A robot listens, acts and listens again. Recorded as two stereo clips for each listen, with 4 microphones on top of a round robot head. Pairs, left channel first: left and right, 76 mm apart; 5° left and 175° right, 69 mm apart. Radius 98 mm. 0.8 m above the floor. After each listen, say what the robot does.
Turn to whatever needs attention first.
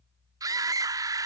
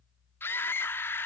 Turn 50° right.
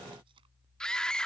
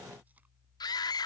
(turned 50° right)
Turn 10° left.
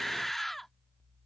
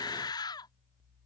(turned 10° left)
Facing the scream.